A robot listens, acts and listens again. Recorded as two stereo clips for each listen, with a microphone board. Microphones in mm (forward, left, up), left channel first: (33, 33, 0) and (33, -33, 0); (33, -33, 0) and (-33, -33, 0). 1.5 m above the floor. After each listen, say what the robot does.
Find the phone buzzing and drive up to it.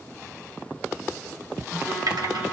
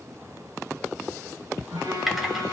Turn 165° right.
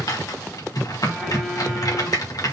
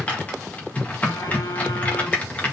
Keep listening.
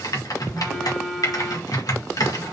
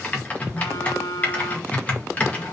Drive 1.0 m forward.
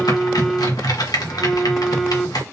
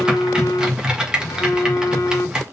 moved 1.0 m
Drive 1.0 m forward.
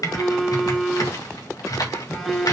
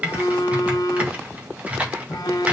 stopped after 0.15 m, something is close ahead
I am next to the phone buzzing.